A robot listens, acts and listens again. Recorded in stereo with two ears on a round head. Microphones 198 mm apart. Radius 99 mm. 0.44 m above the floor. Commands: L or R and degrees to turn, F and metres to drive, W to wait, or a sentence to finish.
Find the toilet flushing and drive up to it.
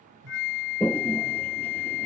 L30
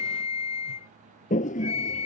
L140
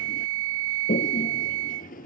L40
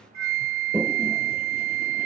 F1.0
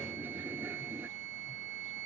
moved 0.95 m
R10
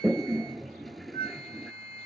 F1.0
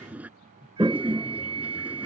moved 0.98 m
F1.0
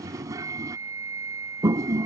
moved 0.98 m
R15
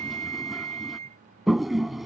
F1.0
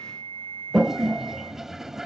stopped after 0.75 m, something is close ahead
I am next to the toilet flushing.